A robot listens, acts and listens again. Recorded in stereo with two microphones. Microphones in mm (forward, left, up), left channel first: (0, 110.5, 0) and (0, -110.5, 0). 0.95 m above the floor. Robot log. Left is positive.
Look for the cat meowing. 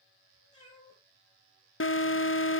note: The cat meowing: about 20° left or 160° left.
cmd yaw +20
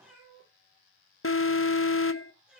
end: Found it: a cat meowing, straight ahead, over 4 m away.